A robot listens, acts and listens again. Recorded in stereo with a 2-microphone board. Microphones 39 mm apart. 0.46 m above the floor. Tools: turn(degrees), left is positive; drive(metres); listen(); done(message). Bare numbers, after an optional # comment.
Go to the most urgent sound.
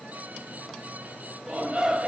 # The shout: about 30° right or 150° right.
turn(-30)
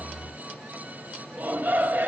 # So it is at 115° right.
turn(-115)
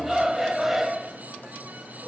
drive(1.0)
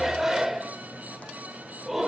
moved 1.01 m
# The shout is now 10° right.
turn(-10)
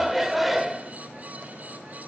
drive(1.0)
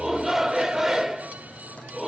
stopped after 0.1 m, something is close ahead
# The shout is now 10° right.
turn(-10)
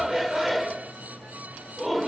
done("Arrived at the shout, straight ahead.")